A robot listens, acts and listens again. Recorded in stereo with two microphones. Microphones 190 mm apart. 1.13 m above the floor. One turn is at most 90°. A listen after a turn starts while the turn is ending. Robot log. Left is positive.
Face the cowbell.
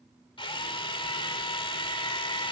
cmd idle
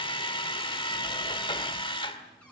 cmd idle
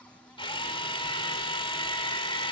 end: I can't make out a cowbell, only a drill.